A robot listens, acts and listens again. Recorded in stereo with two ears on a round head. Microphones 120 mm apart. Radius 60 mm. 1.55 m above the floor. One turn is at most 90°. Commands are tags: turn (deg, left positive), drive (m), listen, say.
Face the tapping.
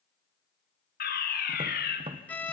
<turn deg="-40"/>
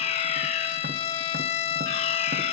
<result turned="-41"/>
<listen/>
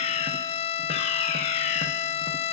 <listen/>
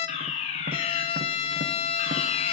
<say>I heard tapping, but can't make it out now. It was about 5° left or 100° right.</say>